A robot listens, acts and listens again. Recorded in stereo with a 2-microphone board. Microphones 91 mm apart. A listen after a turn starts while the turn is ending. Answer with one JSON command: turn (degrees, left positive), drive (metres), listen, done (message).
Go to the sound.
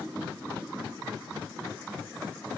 {"listen": true}
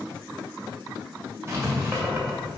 {"turn": -30}
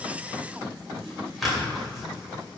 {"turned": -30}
{"drive": 1.0}
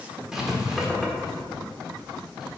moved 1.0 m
{"drive": 1.0}
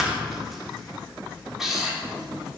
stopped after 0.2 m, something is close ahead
{"done": "I am next to the writing."}